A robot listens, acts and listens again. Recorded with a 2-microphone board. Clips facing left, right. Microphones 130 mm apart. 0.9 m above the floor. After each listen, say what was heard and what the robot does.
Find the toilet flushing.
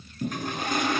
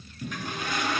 The toilet flushing: about 50° left or 130° left. Turn 50° left.
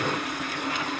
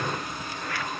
So it is at 85° left. Turn 85° left.
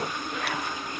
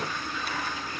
The toilet flushing is now 20° left. Turn 20° left.
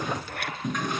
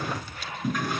Facing the toilet flushing, over 4 m away.